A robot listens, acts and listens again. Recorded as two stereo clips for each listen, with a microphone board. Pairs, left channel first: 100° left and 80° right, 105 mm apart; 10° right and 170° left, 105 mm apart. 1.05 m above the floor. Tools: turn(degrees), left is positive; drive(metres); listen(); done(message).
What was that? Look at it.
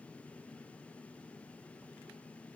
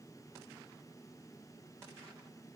listen()
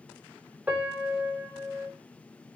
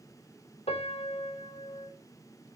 done("Found it: a piano, straight ahead.")